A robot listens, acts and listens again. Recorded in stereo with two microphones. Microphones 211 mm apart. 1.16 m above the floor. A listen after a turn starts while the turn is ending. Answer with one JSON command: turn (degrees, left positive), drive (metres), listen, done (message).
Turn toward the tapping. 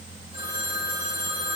{"listen": true}
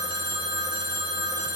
{"listen": true}
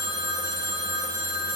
{"done": "I can't make out tapping to turn to."}